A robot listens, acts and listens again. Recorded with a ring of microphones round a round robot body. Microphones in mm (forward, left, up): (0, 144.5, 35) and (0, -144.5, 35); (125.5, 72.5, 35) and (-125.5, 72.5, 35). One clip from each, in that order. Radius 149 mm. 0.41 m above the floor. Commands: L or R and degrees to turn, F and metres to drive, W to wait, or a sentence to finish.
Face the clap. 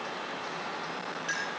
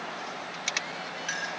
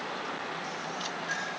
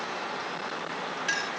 W
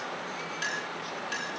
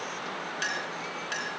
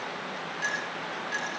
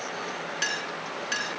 W
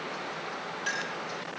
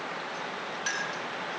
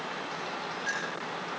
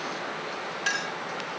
I can't make out a clap, only a clink.